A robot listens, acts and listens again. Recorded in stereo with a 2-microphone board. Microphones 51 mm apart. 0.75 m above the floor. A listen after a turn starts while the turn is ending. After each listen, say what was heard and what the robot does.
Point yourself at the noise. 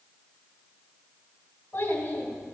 The child speaking: about 35° left or 145° left. Turn 35° left.
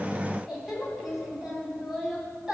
So it is at 15° right. Turn 15° right.
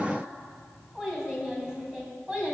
The child speaking is now 15° right. Turn 15° right.
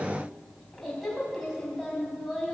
Facing the child speaking.